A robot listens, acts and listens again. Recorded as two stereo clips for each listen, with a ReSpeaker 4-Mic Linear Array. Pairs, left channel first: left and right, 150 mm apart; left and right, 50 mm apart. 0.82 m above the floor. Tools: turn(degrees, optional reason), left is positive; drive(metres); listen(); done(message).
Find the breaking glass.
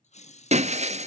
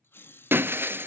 turn(degrees=-50, reason="The breaking glass: about 50° right or 130° right.")
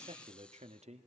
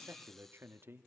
listen()
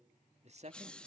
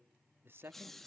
done("I heard breaking glass, but can't make it out now. It was about straight ahead or 80° right.")